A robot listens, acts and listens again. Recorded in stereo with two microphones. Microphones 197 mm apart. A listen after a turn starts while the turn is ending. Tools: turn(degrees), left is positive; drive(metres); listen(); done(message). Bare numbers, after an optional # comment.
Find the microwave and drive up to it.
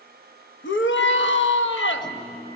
# The microwave: about 25° left or 155° left.
turn(25)
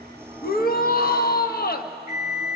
drive(1.0)
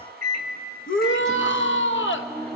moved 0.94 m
drive(1.0)
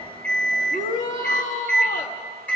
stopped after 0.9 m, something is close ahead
done("Arrived at the microwave, straight ahead.")